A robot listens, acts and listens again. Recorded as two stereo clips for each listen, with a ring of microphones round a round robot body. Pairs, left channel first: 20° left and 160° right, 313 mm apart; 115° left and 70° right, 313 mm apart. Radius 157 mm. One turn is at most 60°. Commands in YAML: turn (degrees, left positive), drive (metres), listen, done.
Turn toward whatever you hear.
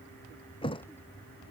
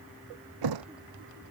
turn: -50
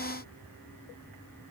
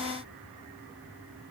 done: "Facing where the thud came from. I can't hear it now."